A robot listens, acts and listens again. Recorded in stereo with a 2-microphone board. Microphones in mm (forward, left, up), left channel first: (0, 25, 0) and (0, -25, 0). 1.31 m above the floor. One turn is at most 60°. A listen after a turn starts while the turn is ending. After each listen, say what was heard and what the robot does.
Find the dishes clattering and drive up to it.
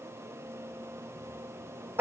Keep listening.
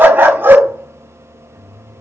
Keep listening.
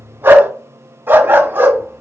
I can't make out dishes clattering, only a dog barking.